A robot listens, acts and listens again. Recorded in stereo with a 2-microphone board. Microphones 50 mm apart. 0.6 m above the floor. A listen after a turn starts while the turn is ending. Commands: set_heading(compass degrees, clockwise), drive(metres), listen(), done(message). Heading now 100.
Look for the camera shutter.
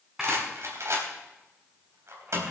set_heading(130)
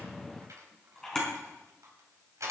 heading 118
set_heading(103)
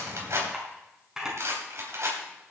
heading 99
done("Facing the camera shutter, over 4 m away.")